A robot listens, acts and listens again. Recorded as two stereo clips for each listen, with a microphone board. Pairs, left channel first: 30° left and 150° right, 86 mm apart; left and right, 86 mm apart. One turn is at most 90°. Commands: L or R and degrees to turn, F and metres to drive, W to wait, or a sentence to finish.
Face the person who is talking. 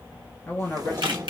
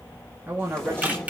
R30
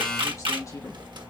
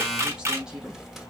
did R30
W
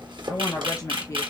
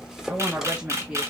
R15
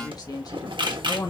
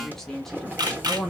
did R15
Facing the woman speaking.